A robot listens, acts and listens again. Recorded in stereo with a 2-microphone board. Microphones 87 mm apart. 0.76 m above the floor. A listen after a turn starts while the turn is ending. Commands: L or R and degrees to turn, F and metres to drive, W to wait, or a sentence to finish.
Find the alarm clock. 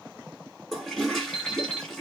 L90
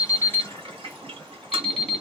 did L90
Found it: an alarm clock, straight ahead, 1 to 2 m away.